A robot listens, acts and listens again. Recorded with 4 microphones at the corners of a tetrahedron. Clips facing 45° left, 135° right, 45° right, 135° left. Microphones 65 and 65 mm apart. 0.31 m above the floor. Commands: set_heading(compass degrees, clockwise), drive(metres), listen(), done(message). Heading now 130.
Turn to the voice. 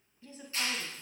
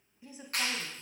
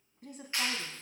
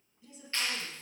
set_heading(190)
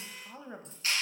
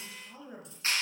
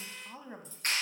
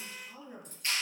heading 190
done("Found it: a woman speaking, straight ahead.")